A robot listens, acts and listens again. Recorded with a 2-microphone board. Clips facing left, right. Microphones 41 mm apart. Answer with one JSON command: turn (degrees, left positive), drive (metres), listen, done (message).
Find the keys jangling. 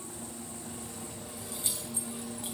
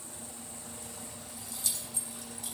{"turn": 35}
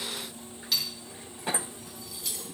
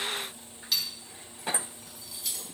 {"done": "Facing the keys jangling, 2 to 4 m away."}